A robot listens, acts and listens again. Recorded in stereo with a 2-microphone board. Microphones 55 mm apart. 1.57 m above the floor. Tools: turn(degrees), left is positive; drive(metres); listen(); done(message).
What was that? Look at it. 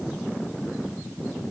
listen()
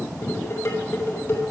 turn(degrees=55)
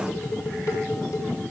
turn(degrees=65)
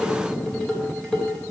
turn(degrees=15)
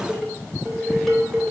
done("Found it: dishes clattering, straight ahead, over 4 m away.")